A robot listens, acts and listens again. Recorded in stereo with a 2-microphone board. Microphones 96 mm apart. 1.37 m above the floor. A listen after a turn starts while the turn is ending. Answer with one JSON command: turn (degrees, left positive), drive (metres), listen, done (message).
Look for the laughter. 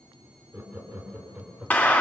{"turn": -30}
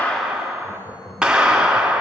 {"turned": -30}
{"turn": 25}
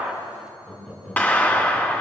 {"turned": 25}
{"done": "Facing the laughter."}